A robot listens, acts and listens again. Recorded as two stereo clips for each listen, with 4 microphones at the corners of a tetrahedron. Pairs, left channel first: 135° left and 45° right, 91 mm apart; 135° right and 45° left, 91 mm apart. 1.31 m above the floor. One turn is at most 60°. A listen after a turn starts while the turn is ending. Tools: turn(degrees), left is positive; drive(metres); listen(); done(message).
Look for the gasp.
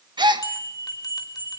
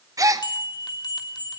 turn(degrees=-10)
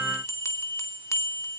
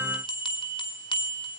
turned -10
done("I heard a gasp from this way, but can't make it out now.")